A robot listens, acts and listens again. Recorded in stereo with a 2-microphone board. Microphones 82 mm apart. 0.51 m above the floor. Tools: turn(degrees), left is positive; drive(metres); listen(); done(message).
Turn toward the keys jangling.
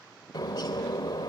listen()
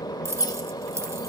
turn(degrees=-35)
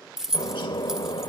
done("Found it: keys jangling, straight ahead, under 1 m away.")